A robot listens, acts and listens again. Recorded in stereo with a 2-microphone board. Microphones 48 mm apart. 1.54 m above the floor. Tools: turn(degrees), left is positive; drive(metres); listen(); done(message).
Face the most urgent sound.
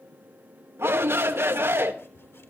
turn(degrees=-60)
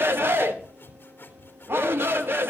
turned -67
turn(degrees=-55)
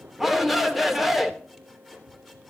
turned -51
done("Found it: a shout, straight ahead.")